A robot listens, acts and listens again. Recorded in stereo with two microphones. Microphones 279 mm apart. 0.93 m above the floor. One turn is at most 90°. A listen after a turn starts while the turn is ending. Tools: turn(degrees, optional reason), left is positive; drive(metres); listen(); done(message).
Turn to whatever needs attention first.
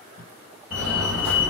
turn(degrees=-30)
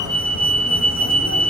turn(degrees=-90, reason="So it is at 145° right.")
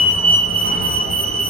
turn(degrees=-55, reason="The fire alarm is now 55° right.")
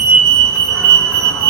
done("Facing the fire alarm.")